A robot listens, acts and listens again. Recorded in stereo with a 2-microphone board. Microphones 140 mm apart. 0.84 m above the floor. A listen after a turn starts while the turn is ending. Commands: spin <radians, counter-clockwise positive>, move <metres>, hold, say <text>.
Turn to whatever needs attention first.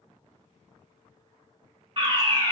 spin -0.70
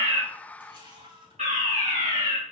spin -1.57
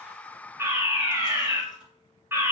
spin -0.35
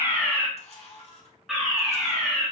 say Facing the fire alarm, 2 to 4 m away.